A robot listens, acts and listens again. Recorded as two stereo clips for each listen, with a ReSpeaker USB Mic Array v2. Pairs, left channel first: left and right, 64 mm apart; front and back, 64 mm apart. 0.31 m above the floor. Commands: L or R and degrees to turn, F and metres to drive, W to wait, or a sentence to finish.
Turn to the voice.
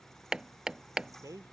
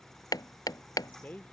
R65
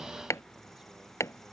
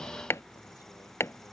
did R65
W
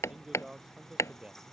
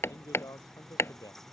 R15
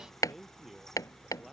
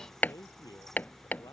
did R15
Found it: a man speaking, straight ahead.